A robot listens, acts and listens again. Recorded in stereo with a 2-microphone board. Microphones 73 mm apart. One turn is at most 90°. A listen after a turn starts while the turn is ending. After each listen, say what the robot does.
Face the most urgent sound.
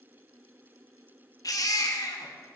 Turn 55° left.
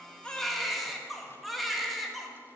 Facing the baby crying.